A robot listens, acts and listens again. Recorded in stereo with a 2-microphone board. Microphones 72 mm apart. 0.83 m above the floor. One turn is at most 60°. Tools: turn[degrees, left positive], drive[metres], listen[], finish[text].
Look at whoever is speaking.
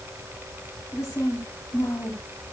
Thought: The woman speaking: about 40° left or 140° left.
Action: turn[40]
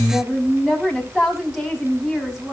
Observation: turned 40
Action: finish[Found it: a woman speaking, straight ahead, over 4 m away.]